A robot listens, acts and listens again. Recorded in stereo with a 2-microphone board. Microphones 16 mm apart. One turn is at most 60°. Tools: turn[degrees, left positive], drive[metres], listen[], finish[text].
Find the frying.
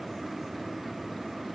Action: listen[]
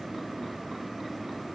Action: listen[]
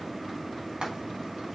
Thought: The frying: about 70° right or 110° right.
Action: turn[-60]
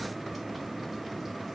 Action: listen[]
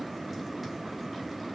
Action: listen[]
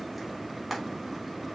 Thought: So it is at 10° right.
Action: turn[-10]
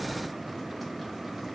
Action: listen[]
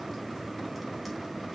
Action: listen[]
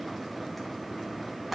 Action: finish[I heard frying from this way, but can't make it out now.]